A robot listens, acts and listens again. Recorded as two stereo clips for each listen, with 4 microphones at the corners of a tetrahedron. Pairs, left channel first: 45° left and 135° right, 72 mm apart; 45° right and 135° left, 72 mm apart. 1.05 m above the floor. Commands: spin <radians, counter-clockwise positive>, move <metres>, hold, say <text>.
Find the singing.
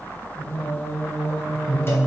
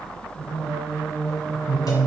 spin 1.83
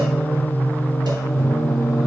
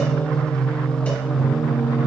spin 1.22
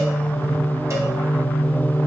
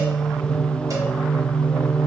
spin 0.35
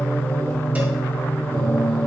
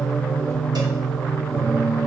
say Facing the singing.